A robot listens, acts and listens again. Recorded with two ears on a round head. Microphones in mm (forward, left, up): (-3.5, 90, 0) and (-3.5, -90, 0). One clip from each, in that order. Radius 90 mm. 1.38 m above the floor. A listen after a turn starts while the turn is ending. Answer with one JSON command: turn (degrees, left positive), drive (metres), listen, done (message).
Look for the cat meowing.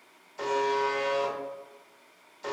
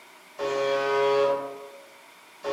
{"listen": true}
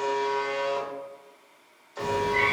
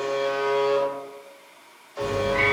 {"turn": 45}
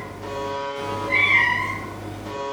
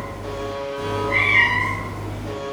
{"turn": 40}
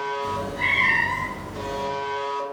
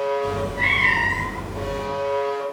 {"turn": 10}
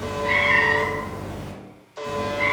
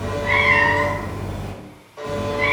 {"done": "Facing the cat meowing, 1 to 2 m away."}